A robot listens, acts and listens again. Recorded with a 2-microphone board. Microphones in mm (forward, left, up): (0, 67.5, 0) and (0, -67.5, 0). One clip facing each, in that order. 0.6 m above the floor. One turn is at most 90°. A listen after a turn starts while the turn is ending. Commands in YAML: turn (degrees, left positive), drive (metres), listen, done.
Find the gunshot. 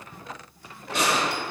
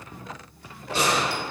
turn: -30
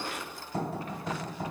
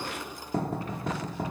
listen: true
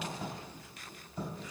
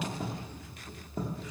done: "I heard a gunshot, but can't make it out now. It was about straight ahead or 120° right."